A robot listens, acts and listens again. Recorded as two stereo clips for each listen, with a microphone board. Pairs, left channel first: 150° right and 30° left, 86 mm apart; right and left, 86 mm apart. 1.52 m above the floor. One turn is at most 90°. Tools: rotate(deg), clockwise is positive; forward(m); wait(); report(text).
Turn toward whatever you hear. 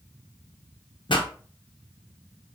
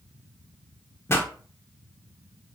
rotate(90)
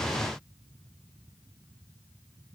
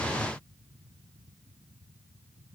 rotate(55)
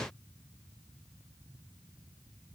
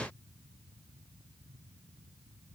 report("I heard a pop from this way, but can't make it out now.")